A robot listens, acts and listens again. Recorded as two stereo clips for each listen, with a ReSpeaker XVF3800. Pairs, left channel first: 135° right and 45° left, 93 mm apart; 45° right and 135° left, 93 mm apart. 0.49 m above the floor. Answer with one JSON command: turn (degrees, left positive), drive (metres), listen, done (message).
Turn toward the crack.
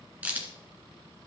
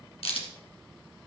{"turn": -30}
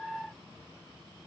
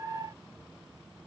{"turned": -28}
{"done": "Facing where the crack came from. I can't hear it now."}